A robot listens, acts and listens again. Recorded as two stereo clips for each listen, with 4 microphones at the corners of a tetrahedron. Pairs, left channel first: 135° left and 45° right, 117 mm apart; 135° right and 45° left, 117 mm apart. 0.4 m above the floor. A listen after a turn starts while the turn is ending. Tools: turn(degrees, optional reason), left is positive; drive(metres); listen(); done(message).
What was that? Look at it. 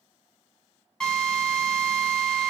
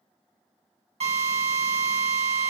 turn(degrees=50, reason="The drill: 50° left.")
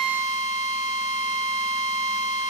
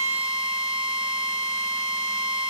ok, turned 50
done("Found it: a drill, straight ahead.")